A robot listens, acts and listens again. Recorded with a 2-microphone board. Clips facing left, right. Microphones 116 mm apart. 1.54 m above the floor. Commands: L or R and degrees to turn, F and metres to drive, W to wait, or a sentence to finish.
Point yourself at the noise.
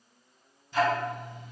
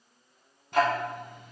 R60
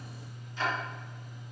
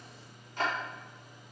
R60
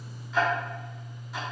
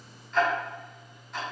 Found it: ticking, straight ahead, under 1 m away.